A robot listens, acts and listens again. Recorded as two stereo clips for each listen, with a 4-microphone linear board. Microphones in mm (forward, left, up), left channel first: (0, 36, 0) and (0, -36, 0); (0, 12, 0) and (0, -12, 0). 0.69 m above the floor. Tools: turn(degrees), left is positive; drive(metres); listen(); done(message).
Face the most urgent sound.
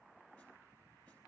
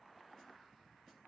listen()
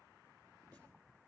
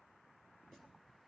listen()
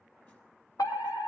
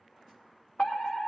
turn(degrees=60)
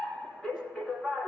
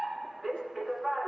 turn(degrees=10)
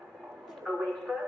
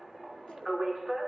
done("Facing the fire alarm.")